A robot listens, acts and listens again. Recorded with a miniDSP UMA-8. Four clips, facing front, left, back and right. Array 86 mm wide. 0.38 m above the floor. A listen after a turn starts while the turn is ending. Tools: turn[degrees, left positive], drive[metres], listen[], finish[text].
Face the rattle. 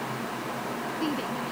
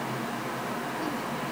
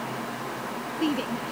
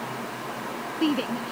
Action: listen[]
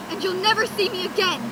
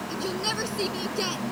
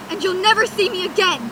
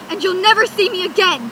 Action: listen[]
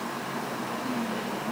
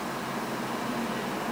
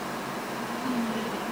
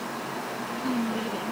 Action: finish[I can't make out a rattle to turn to.]